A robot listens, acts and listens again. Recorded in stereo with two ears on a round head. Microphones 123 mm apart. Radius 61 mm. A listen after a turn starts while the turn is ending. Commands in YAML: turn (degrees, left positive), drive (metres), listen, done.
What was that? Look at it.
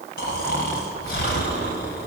turn: 90
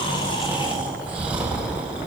turn: -10
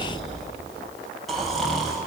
done: "Found it: snoring, straight ahead, over 4 m away."